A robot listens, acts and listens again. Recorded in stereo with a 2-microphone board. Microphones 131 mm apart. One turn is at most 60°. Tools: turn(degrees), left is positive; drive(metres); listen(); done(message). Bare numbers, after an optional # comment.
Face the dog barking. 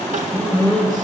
turn(30)
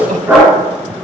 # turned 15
turn(-30)
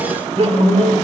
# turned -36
# So it is at 20° left.
turn(20)
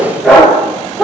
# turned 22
done("Found it: a dog barking, straight ahead, over 4 m away.")